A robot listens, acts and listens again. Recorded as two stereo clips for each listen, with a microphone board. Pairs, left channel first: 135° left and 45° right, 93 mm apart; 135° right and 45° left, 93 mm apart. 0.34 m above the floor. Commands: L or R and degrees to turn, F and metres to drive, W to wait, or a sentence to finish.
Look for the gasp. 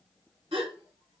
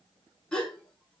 R55
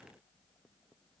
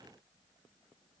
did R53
I heard a gasp from this way, but can't make it out now.